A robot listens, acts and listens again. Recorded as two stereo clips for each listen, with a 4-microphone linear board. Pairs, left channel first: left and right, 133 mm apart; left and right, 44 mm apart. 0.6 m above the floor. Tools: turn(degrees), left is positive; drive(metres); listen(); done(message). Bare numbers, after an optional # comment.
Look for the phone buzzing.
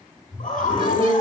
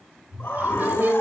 turn(30)
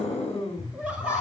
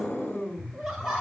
# So it is at 150° left.
turn(150)
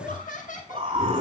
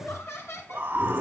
listen()
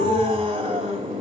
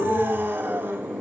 listen()
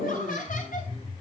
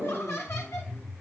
# The phone buzzing is now 55° left.
turn(55)
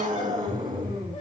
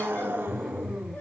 done("Found it: a phone buzzing, straight ahead.")